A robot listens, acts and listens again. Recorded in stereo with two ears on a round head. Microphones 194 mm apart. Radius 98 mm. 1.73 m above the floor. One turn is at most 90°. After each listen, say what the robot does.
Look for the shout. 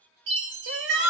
Turn 55° right.
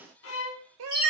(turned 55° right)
Turn 65° right.
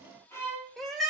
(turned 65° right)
Facing the shout.